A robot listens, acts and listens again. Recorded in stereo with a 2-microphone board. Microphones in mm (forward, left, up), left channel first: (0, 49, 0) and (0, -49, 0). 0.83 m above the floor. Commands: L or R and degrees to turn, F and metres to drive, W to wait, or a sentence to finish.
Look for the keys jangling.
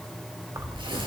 R30
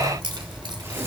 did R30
R130
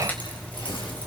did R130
L15
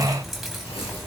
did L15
Found it: keys jangling, straight ahead.